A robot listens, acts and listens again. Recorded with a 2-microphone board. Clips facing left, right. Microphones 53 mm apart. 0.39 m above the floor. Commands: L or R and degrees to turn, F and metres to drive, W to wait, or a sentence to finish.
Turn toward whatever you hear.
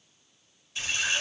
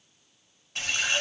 R60
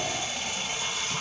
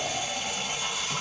R10
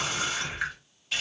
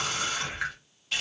Facing the running tap.